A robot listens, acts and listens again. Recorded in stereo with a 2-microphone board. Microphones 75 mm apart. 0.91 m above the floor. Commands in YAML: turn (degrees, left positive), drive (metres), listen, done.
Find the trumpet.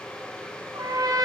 turn: -55
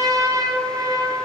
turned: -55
turn: -60
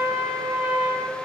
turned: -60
turn: -20
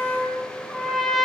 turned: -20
done: "Facing the trumpet, 1 to 2 m away."